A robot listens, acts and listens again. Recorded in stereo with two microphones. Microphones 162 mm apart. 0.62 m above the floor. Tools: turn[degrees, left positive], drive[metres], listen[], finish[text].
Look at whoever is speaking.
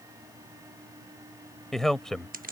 Action: turn[30]
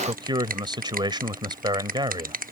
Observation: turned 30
Thought: So it is at 30° right.
Action: turn[-30]
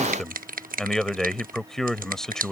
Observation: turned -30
Action: finish[Facing the man speaking.]